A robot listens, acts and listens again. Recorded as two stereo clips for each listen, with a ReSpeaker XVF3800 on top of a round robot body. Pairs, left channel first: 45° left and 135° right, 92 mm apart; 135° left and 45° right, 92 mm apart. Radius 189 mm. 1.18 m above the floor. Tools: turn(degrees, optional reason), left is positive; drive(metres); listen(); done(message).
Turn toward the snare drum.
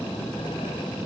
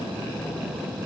listen()
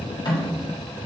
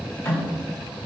turn(degrees=75, reason="The snare drum: 75° left.")
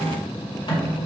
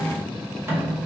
turn(degrees=15, reason="The snare drum is now 15° left.")
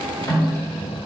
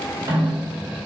done("Found it: a snare drum, straight ahead.")